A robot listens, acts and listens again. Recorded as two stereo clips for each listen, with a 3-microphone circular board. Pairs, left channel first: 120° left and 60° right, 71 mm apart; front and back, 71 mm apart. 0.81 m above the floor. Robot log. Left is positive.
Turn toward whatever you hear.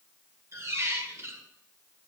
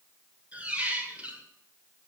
note: The squeak: 110° right.
cmd yaw -110
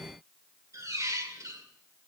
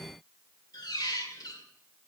note: The squeak is now 15° right.
cmd yaw -15
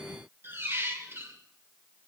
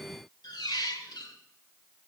end: Facing the squeak.